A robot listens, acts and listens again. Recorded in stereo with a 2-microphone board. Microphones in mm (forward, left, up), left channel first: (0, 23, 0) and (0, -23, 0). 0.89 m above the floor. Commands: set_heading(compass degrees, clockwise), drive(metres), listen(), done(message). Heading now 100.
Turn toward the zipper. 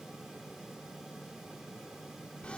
listen()
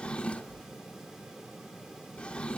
listen()
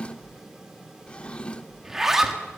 set_heading(130)
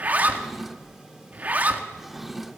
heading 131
set_heading(271)
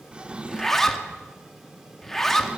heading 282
set_heading(272)
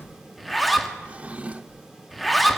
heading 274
done("Facing the zipper.")